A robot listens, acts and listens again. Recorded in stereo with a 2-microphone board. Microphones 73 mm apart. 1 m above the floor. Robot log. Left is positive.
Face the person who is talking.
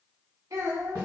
note: The child speaking: about 55° right or 125° right.
cmd yaw -55
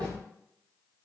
cmd idle
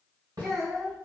end: Found it: a child speaking, straight ahead, 1 to 2 m away.